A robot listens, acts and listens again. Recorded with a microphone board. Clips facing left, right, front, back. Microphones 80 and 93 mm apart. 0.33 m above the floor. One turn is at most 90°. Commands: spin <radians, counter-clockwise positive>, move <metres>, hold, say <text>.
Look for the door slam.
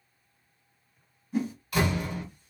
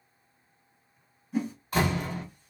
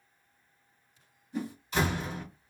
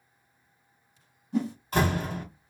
spin -1.57
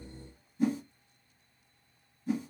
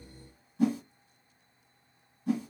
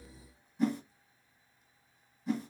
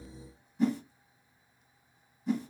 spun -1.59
spin -0.87
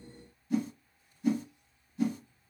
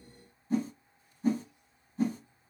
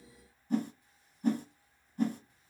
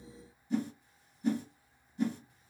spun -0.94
say I heard a door slam from this way, but can't make it out now.